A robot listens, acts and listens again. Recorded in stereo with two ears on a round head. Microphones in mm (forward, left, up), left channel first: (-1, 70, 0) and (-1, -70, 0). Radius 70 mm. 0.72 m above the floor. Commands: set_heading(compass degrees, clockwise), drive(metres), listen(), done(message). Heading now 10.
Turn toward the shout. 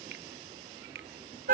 listen()
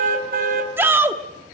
set_heading(40)
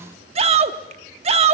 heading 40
set_heading(175)
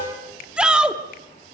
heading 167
done("Facing the shout, 1 to 2 m away.")